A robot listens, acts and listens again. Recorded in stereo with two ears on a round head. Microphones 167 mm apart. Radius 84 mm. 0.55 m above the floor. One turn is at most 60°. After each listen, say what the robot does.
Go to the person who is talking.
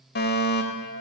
Keep listening.
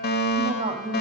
Turn 35° right.
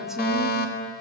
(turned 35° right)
Keep listening.
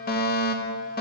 Keep listening.
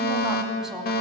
I heard a woman speaking, but can't make it out now. It was about straight ahead or 110° right. I did not reach it.